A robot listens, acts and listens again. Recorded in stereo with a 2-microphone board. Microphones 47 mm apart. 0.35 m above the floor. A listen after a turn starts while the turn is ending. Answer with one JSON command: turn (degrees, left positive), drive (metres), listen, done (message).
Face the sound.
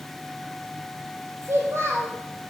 {"turn": -65}
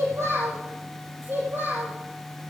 {"turn": -50}
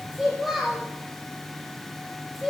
{"done": "Found it: a child speaking, straight ahead, over 4 m away."}